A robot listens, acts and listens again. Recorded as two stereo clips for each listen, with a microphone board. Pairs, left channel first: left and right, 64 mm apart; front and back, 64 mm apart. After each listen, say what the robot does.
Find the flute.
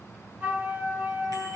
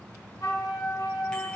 Turn 30° right.
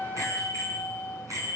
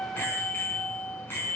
Turn 10° right.
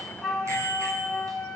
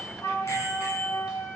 Facing the flute.